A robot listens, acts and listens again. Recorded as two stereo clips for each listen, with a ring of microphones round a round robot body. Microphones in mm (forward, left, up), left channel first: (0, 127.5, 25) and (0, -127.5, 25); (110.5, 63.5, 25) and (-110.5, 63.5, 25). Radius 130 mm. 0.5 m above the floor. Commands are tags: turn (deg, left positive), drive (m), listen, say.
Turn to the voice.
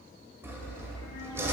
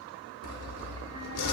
<listen/>
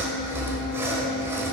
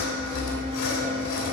<listen/>
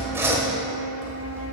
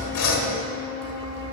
<say>I can't make out anyone speaking to turn to.</say>